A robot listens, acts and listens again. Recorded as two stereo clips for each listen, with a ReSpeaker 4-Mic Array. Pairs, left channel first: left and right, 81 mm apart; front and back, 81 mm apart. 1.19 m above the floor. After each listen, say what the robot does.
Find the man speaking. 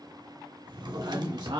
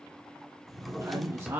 Turn 120° right.
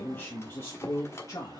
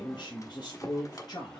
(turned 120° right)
Turn 45° left.
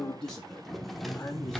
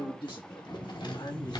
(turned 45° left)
Turn 25° left.
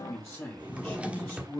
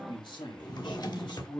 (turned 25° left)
Turn 20° left.
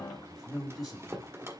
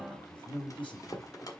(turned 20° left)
Found it: a man speaking, straight ahead, 2 to 4 m away.